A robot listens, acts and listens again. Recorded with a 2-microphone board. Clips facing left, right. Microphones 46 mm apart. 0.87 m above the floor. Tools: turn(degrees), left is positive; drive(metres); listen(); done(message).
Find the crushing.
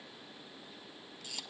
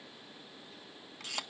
listen()
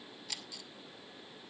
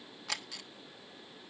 listen()
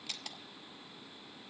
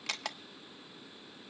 done("I can't make out crushing to turn to.")